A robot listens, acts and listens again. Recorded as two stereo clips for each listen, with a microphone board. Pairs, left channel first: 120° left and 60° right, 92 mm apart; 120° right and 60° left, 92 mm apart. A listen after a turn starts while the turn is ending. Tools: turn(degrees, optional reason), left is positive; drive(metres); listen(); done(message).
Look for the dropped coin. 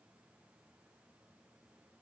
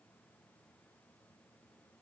listen()
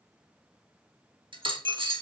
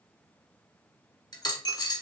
turn(degrees=-80, reason="The dropped coin: 80° right.")
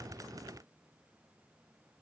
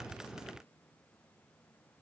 done("Facing where the dropped coin came from. I can't hear it now.")